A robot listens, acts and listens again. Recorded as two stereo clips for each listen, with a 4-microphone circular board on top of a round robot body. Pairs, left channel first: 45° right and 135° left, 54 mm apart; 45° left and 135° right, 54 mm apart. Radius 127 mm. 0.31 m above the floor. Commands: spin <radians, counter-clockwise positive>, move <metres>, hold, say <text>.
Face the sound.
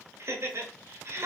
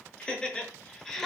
spin 2.27
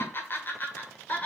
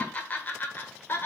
spin 0.17
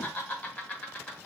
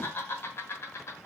spin 0.35
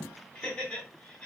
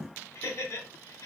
spin 0.26
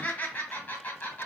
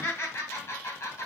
say Found it: laughter, straight ahead.